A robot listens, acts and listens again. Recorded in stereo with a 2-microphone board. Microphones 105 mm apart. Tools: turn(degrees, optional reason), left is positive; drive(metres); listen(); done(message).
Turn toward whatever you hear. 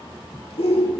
turn(degrees=65, reason="The shout: about 65° left or 115° left.")
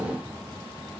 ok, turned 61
listen()
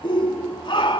turn(degrees=50, reason="So it is at 50° left.")
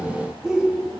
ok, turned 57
done("Facing the shout.")